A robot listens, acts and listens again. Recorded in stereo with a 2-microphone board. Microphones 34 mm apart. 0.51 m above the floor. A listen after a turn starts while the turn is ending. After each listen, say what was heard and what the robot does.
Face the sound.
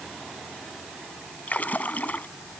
The splash: about 45° left or 135° left. Turn 45° left.
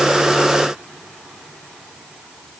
Keep listening.
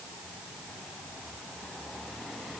I heard a splash, but can't make it out now. It was about straight ahead or 90° left.